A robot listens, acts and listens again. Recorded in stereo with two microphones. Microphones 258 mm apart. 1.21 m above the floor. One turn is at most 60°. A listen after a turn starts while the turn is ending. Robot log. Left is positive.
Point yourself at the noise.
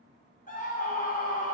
note: The scream: about 30° left or 150° left.
cmd yaw +30
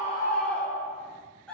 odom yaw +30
end: Found it: a scream, straight ahead, under 1 m away.